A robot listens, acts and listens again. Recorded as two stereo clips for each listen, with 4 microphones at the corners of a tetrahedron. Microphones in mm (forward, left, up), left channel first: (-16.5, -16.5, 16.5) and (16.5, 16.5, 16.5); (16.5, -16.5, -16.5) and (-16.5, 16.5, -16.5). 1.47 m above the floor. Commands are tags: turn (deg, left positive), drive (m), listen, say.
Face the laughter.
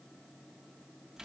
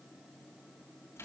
<listen/>
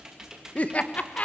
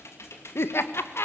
<turn deg="-75"/>
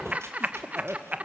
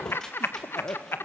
<turn deg="-10"/>
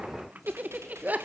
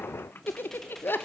<say>Facing the laughter.</say>